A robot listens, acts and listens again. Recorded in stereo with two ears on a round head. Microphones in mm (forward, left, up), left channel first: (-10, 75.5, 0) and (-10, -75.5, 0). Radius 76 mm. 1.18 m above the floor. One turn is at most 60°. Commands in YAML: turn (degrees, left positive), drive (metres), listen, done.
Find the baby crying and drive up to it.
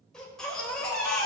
turn: 30
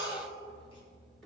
turn: 60
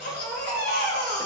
turn: 60
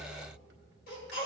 turn: 60
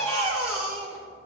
turn: 20
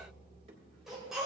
drive: 1.0
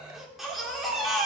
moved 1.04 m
drive: 1.0
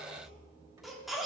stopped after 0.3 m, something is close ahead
done: "Arrived at the baby crying, straight ahead."